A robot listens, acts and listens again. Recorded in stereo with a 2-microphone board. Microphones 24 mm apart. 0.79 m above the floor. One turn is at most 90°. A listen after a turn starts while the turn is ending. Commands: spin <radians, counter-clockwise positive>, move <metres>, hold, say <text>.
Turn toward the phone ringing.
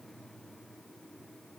hold
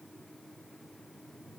hold
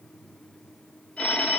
spin 1.57
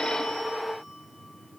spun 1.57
hold
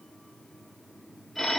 say Facing the phone ringing, 2 to 4 m away.